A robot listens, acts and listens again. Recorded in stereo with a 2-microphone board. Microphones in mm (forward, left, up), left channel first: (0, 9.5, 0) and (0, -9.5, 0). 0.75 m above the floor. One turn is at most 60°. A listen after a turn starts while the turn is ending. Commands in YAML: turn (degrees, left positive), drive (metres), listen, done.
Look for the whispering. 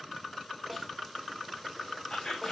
turn: 35
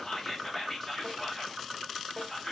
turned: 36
done: "Facing the whispering, 1 to 2 m away."